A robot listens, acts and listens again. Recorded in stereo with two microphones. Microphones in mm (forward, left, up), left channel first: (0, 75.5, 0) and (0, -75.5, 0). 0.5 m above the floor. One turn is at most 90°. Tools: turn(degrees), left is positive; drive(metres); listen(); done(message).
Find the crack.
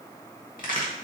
turn(degrees=65)
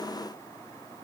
listen()
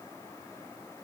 done("I heard a crack, but can't make it out now. It was about straight ahead or 50° left.")